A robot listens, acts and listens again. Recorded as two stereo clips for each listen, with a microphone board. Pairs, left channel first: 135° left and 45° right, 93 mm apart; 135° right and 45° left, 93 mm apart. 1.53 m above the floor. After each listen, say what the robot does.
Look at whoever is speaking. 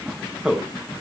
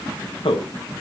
Turn 130° right.
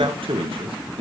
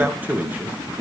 Turn 30° right.
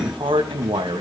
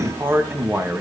Turn 20° right.
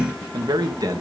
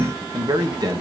Facing the man speaking, 1 to 2 m away.